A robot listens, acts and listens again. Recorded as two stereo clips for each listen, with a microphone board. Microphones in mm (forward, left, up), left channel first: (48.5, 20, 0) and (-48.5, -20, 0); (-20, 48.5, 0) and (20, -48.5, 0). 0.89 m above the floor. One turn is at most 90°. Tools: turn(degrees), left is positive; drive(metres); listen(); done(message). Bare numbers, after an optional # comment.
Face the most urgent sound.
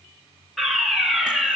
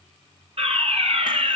# The fire alarm: 65° right.
turn(-65)
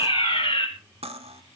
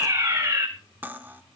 done("Found it: a fire alarm, straight ahead.")